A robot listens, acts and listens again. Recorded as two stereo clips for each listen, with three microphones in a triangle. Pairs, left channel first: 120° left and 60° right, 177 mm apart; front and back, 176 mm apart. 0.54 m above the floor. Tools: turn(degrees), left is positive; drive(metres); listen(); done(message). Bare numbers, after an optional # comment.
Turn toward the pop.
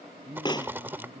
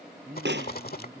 # The pop: 175° right.
turn(-175)
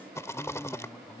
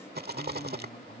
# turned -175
done("Facing where the pop came from. I can't hear it now.")